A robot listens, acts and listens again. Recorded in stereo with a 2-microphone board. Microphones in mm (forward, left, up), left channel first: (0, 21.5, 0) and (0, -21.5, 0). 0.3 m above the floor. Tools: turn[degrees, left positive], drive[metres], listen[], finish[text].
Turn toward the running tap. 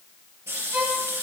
Thought: The running tap: about 70° right or 110° right.
Action: turn[-70]
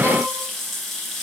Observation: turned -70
Action: finish[Facing the running tap, 2 to 4 m away.]